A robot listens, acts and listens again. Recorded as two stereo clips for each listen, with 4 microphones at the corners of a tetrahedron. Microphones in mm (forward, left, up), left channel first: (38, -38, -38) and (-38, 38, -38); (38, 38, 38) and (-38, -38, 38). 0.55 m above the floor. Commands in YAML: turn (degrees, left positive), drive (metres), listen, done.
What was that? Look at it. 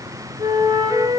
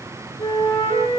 turn: 85
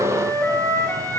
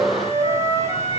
turn: 25
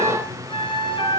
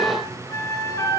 turn: -15
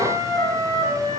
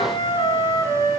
done: "Facing the flute."